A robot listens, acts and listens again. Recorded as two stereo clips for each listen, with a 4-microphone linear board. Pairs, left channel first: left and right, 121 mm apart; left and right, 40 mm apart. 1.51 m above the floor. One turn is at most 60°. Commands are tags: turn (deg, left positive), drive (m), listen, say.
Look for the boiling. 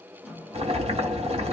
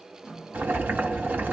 <turn deg="-60"/>
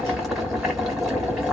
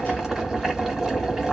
<say>Found it: boiling, straight ahead, 1 to 2 m away.</say>